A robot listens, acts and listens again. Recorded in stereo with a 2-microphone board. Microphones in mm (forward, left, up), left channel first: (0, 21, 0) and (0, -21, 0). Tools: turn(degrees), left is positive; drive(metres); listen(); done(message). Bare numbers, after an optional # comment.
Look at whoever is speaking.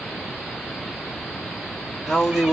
turn(-30)
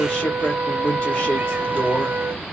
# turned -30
# So it is at 25° left.
turn(25)
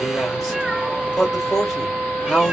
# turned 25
done("Facing the man speaking, 1 to 2 m away.")